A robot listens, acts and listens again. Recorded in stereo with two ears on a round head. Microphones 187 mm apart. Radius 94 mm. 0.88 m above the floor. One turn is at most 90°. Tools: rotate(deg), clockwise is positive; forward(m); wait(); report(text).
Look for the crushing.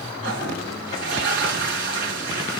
wait()
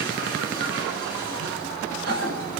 wait()
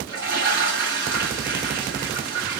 report("I can't make out crushing to turn to.")